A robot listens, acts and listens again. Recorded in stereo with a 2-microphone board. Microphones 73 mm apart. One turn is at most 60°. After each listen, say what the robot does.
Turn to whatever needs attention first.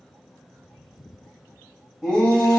Turn 30° right.
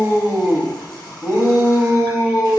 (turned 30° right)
Turn 60° right.
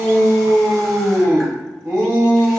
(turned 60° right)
Turn 60° right.
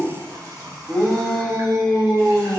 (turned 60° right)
Facing the shout, under 1 m away.